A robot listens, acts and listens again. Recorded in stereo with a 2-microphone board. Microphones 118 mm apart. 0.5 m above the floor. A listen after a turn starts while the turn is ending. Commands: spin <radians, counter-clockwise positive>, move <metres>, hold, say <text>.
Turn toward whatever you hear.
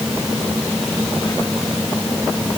hold
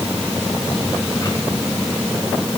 hold
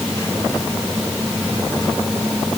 say I can't make out anything.